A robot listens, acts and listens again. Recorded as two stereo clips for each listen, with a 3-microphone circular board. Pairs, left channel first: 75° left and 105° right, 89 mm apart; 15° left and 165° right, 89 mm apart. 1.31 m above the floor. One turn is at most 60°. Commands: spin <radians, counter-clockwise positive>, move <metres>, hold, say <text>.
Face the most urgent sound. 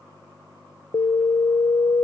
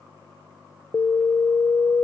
spin 1.05
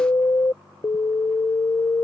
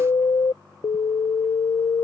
spin 0.61
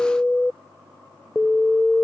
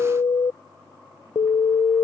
say Facing the alarm.